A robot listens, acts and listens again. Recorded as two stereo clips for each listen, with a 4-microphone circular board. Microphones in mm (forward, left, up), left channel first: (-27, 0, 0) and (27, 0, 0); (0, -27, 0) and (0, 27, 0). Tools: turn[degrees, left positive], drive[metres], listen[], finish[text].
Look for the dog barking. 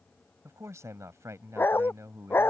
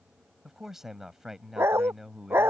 Thought: The dog barking: 135° left.
Action: turn[135]
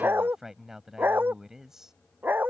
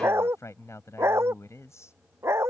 Thought: The dog barking is now 55° left.
Action: turn[55]
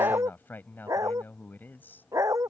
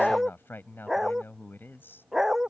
Action: finish[Found it: a dog barking, straight ahead.]